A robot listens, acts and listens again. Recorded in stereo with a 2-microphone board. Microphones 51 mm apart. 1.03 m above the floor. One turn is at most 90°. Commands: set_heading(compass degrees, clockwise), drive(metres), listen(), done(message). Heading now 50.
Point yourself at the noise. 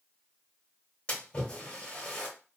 set_heading(30)
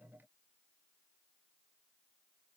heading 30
listen()
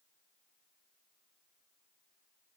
done("I heard a splash, but can't make it out now. It was about straight ahead or 140° left.")